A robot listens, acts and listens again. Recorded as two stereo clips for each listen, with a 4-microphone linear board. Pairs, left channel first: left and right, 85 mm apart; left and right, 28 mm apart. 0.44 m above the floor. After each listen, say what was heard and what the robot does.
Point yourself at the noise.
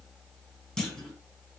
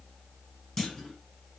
Turn 30° left.
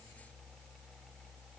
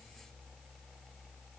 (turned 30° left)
Keep listening.
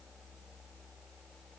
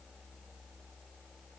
I heard a clunk, but can't make it out now. It was about 25° right or 145° left.